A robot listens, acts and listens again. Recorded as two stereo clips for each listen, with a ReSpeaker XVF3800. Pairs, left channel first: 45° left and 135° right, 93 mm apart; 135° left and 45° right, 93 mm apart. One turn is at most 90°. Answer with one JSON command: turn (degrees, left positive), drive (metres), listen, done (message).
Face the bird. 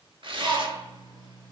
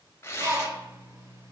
{"turn": -90}
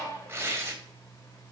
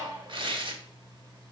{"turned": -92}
{"turn": -10}
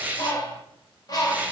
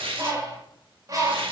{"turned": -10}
{"done": "Found it: a bird, straight ahead."}